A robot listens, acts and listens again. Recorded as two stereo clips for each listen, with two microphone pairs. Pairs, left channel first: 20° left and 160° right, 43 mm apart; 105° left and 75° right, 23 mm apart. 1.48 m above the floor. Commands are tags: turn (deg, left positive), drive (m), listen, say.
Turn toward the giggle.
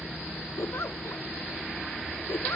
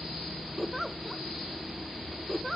<turn deg="20"/>
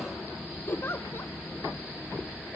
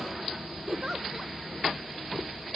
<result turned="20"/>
<say>Facing the giggle.</say>